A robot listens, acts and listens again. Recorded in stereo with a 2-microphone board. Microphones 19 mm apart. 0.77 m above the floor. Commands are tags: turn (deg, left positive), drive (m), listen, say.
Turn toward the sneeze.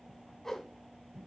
<listen/>
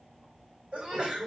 <turn deg="-90"/>
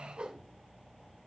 <say>I heard a sneeze from this way, but can't make it out now.</say>